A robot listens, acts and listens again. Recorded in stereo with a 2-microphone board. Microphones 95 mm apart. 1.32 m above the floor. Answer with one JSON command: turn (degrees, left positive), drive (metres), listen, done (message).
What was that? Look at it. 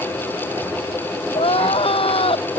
{"turn": 90}
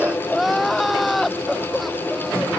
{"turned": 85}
{"done": "Found it: crying, straight ahead."}